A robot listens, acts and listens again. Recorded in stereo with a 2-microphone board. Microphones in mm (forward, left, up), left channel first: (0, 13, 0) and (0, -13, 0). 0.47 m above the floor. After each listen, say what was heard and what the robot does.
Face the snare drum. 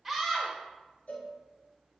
Keep listening.
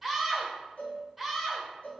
Keep listening.
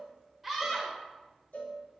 I can't make out a snare drum, only a cowbell and a scream.